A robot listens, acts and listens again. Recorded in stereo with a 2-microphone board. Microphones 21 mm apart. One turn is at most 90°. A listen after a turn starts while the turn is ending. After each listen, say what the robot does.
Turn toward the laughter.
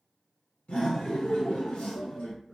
Turn 70° left.
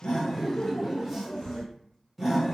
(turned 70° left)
Found it: laughter, straight ahead.